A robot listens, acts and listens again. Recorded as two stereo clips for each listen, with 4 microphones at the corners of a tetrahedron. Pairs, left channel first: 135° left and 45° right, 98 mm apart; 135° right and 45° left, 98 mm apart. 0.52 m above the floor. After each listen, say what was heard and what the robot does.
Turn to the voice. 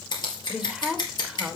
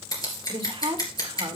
The woman speaking: 35° left. Turn 35° left.
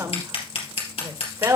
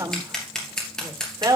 Facing the woman speaking.